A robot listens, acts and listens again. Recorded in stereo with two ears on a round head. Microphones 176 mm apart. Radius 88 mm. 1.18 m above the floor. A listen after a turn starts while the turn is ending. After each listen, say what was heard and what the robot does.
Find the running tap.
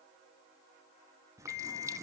The running tap: about 15° right or 165° right. Turn 15° right.
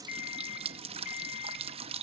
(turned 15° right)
So it is at 150° right. Turn 150° right.
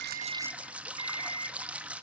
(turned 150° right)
Facing the running tap, under 1 m away.